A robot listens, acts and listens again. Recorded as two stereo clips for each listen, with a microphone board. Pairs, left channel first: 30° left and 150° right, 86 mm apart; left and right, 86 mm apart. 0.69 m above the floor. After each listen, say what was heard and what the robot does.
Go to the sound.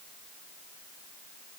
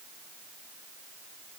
Keep listening.
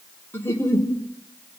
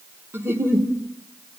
The giggle: 30° right. Turn 30° right.
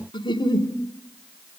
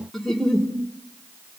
Drive 1.0 m forward.
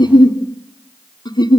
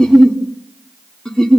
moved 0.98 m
The giggle is now 10° left. Turn 10° left.
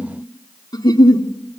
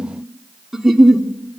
Drive 1.0 m forward.
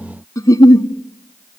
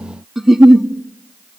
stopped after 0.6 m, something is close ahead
Arrived at the giggle, straight ahead.